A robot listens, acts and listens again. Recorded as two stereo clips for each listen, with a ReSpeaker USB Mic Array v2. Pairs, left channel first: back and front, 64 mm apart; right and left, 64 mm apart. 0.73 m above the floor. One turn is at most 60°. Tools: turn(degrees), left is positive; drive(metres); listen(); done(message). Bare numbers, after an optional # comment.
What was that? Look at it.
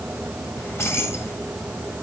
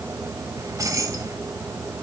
# The keys jangling: 130° left.
turn(60)
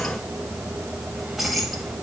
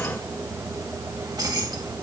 # The keys jangling is now 85° left.
turn(60)
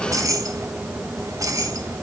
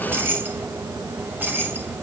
# The keys jangling is now 30° left.
turn(30)
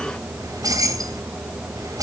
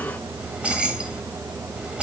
# The keys jangling is now 15° left.
turn(15)
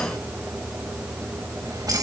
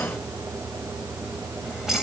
done("Found it: keys jangling, straight ahead, 2 to 4 m away.")